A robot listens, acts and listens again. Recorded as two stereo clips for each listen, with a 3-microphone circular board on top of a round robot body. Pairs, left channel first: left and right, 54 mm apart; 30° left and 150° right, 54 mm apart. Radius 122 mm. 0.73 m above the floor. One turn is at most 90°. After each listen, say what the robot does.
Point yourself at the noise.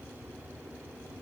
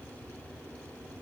Keep listening.
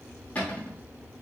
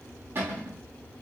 Turn 90° left.
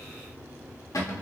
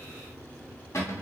Turn 65° left.
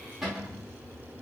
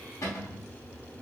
Facing the cupboard door, 1 to 2 m away.